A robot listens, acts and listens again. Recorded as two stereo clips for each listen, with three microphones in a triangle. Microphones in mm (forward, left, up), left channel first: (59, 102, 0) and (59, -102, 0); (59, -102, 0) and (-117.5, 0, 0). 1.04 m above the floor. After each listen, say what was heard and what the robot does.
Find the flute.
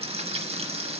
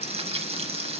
Keep listening.
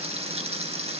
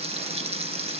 Keep listening.
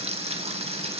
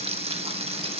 I can't make out a flute, only frying.